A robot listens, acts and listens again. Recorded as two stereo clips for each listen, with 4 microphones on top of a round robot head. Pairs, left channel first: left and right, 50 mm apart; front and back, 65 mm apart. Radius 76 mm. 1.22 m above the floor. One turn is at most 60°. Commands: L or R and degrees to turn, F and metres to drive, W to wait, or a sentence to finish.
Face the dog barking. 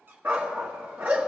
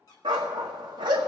R60
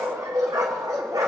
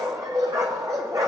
R60
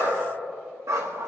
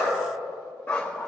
R60
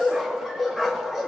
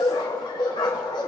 Facing the dog barking, 1 to 2 m away.